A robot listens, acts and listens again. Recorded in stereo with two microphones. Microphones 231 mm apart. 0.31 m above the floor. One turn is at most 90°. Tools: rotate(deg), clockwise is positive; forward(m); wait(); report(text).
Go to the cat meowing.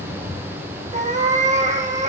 rotate(30)
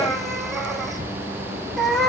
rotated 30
forward(1.0)
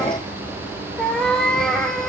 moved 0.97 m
forward(1.0)
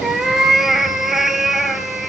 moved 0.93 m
forward(1.0)
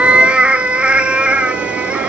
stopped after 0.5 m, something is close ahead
report("Arrived at the cat meowing, straight ahead.")